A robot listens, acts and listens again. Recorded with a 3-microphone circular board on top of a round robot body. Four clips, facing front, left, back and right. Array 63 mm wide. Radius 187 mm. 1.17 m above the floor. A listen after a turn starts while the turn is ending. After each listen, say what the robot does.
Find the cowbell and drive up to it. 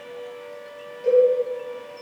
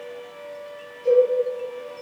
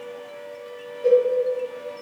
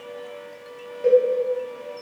Turn 95° right.
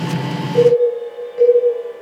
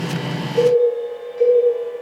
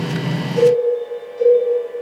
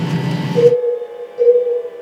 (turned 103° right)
Drive 1.0 m forward.
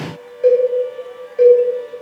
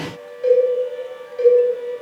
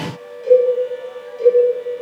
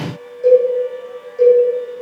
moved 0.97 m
Turn 10° left.
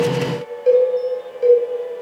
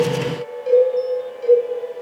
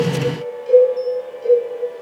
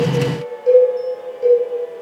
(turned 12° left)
Drive 1.0 m forward.
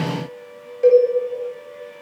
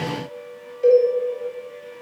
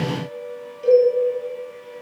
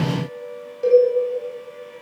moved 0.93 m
Drive 1.0 m forward.
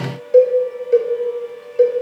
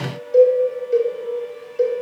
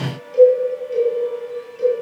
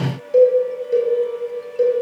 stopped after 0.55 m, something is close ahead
Turn 10° right.
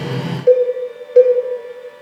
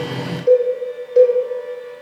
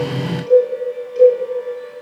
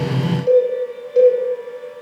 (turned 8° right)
I am next to the cowbell.